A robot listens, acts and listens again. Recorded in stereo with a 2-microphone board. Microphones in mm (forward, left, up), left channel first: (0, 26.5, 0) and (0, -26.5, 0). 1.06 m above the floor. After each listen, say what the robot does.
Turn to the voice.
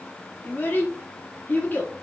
Turn 35° left.
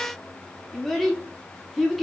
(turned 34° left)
Facing the child speaking, 1 to 2 m away.